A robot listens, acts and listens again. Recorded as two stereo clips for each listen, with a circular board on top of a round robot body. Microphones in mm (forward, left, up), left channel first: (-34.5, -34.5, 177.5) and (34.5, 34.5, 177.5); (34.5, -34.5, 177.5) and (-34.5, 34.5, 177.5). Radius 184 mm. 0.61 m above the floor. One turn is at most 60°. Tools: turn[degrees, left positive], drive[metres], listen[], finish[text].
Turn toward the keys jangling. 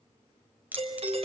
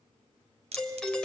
Thought: The keys jangling: 120° left.
Action: turn[60]
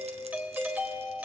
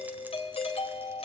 Thought: Nothing new. It was at 60° left.
Action: turn[60]
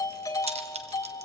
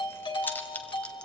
Thought: The keys jangling is now 30° left.
Action: turn[30]
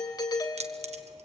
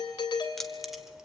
Thought: The keys jangling is now 45° left.
Action: turn[45]
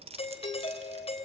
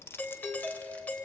Thought: The keys jangling is now 25° left.
Action: turn[25]
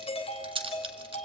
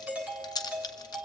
Action: finish[Facing the keys jangling.]